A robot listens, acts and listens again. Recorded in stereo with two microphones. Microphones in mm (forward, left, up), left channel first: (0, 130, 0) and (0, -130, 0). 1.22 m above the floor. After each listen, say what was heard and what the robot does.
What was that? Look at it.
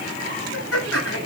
The laughter: about 70° left or 110° left. Turn 70° left.
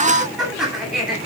Facing the laughter, over 4 m away.